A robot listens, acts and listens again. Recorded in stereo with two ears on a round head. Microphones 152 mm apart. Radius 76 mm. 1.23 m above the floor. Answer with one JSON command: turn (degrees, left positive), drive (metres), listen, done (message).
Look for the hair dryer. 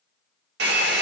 {"turn": -65}
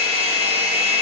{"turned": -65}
{"turn": -40}
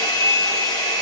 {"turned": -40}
{"turn": 20}
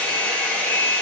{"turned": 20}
{"turn": 10}
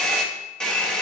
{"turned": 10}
{"done": "Found it: a hair dryer, straight ahead."}